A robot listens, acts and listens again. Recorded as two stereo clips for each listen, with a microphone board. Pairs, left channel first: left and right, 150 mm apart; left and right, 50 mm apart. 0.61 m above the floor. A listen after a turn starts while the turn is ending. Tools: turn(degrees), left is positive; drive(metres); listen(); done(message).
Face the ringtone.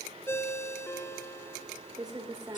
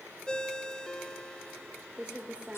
turn(degrees=15)
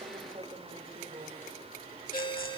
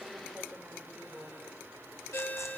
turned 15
turn(degrees=150)
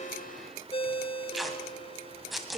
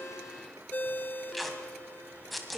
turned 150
turn(degrees=40)
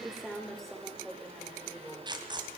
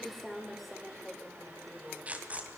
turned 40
listen()
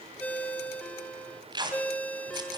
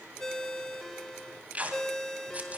turn(degrees=10)
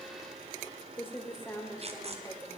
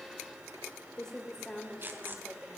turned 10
listen()
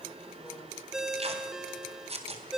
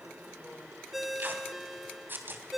done("Found it: a ringtone, straight ahead, 1 to 2 m away.")